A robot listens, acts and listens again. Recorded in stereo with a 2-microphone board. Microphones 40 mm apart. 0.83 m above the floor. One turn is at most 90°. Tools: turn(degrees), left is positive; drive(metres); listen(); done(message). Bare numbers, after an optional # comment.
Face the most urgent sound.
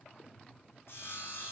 listen()
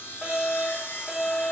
turn(-30)
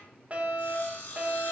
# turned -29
# So it is at 145° right.
turn(-90)
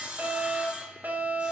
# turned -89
# The fire alarm is now 55° right.
turn(-55)
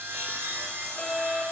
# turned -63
# The fire alarm is now 10° left.
turn(10)
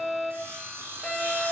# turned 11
done("Found it: a fire alarm, straight ahead.")